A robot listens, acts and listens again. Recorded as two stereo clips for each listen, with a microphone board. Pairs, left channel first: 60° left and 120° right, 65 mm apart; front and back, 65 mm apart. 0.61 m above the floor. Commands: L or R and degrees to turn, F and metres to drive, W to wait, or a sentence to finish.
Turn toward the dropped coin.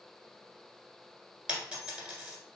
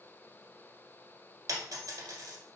L165
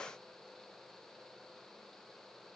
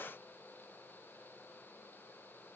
Facing where the dropped coin came from. I can't hear it now.